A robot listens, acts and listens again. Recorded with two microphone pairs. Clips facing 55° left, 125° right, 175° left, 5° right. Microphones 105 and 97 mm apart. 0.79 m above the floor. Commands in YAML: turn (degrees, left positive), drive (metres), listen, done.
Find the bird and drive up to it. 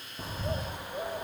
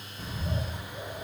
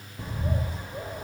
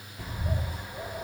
turn: 110
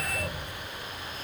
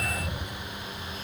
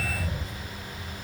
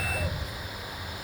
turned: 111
drive: 1.0
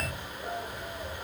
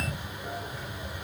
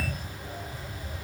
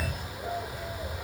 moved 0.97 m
turn: -10
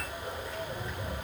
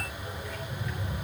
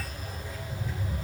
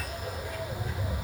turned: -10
drive: 1.0
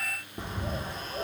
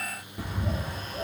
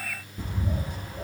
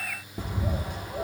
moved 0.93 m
drive: 1.0
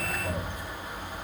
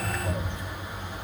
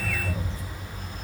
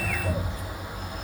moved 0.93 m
turn: -20
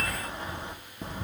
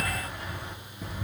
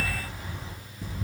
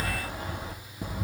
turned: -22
drive: 1.0
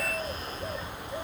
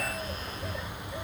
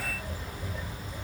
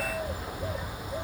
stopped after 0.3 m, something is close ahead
done: "I am next to the bird."